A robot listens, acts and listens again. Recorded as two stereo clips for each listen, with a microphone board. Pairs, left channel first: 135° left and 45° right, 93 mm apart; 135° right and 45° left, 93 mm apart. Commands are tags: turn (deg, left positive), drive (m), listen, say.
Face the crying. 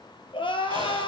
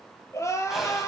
<turn deg="165"/>
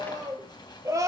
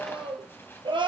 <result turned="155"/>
<turn deg="10"/>
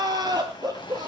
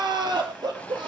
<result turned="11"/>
<say>Found it: crying, straight ahead, 2 to 4 m away.</say>